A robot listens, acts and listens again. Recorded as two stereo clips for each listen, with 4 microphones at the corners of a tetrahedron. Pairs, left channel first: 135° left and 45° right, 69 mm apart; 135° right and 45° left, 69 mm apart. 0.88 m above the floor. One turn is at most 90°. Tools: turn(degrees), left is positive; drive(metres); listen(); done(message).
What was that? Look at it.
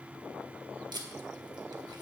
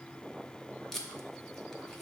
turn(degrees=-50)
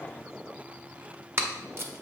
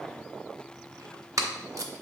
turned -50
turn(degrees=10)
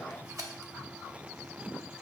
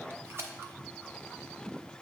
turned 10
done("Facing the tape being pulled, under 1 m away.")